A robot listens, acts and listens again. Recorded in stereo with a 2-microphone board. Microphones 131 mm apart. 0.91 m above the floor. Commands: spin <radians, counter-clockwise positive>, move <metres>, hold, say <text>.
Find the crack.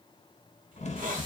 spin 0.96
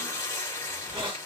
hold
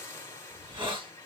say I heard a crack, but can't make it out now. It was about straight ahead or 70° left.